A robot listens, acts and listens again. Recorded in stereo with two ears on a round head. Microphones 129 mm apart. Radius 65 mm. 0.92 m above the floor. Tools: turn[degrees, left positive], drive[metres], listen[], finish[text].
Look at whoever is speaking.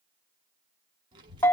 Thought: The child speaking: about 30° right or 150° right.
Action: turn[-30]
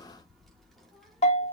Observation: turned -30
Action: finish[Found it: a child speaking, straight ahead.]